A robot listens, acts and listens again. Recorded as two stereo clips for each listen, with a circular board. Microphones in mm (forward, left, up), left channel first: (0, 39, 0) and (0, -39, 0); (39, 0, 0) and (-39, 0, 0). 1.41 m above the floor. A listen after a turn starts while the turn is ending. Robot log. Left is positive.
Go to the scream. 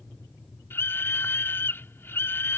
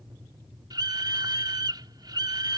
note: The scream: 150° left.
cmd yaw +150
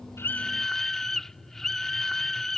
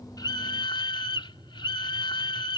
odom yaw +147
cmd fwd 1.0
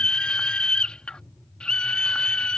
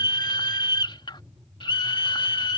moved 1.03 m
note: The scream is now 10° left.
cmd yaw +10
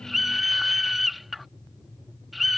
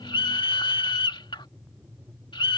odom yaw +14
cmd fwd 1.0
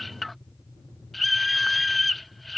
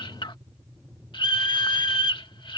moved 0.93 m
cmd fwd 1.0
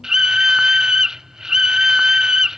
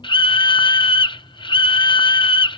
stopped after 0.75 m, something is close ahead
note: The scream is now 10° right.
cmd yaw -10
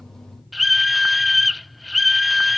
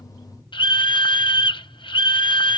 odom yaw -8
end: Arrived at the scream, straight ahead.